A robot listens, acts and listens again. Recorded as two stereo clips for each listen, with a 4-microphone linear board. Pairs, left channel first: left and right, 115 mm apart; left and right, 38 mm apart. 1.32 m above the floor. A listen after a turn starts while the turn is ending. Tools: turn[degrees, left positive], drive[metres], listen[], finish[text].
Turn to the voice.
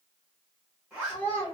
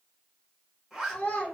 Thought: The child speaking: about 45° left or 135° left.
Action: turn[45]
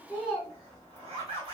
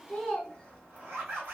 Thought: So it is at 10° left.
Action: turn[10]
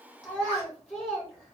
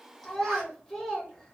Action: finish[Found it: a child speaking, straight ahead.]